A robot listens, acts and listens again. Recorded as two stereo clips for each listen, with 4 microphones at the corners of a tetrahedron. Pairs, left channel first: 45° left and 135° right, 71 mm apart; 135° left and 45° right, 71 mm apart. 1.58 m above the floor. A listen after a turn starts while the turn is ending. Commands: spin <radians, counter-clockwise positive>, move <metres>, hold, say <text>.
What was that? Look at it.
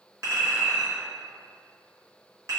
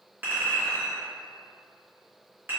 spin -1.75
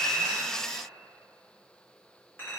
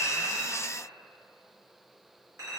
say Found it: a clink, straight ahead.